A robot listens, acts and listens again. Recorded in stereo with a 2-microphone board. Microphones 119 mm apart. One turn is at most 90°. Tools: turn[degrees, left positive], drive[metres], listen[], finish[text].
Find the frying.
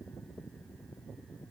Action: listen[]
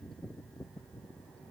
Action: listen[]
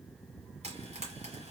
Thought: The frying: about 70° right or 110° right.
Action: turn[-70]
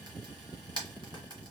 Thought: So it is at 40° right.
Action: turn[-40]
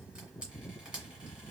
Thought: The frying is now 10° right.
Action: turn[-10]
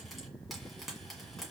Action: finish[Found it: frying, straight ahead, 1 to 2 m away.]